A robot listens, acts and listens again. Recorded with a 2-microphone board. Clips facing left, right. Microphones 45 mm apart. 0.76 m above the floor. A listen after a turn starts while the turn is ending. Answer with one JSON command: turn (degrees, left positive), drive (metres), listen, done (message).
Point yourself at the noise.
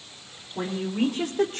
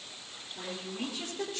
{"turn": 55}
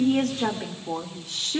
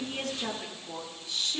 {"turn": 70}
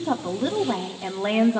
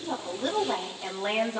{"turn": 25}
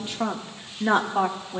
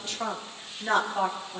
{"turn": 35}
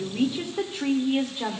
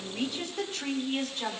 {"turn": 20}
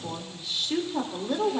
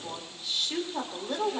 {"done": "Found it: a woman speaking, straight ahead, 2 to 4 m away."}